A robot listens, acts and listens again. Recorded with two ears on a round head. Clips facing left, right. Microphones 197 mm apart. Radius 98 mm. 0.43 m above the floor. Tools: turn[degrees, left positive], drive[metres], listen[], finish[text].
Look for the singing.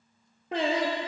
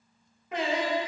Thought: The singing: about 30° left or 150° left.
Action: turn[30]
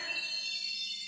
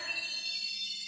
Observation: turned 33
Action: listen[]
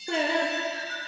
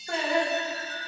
Thought: So it is at 115° left.
Action: turn[115]
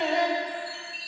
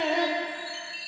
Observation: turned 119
Action: finish[Found it: singing, straight ahead.]